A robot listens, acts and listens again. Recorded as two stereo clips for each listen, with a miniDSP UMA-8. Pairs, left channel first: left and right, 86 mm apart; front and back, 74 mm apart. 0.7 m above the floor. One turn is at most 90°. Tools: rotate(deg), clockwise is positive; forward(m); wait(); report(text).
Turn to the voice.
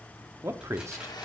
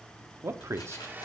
rotate(90)
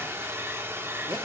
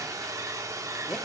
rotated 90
rotate(45)
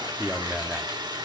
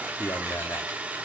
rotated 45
rotate(10)
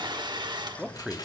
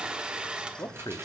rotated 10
report("Found it: a man speaking, straight ahead, 1 to 2 m away.")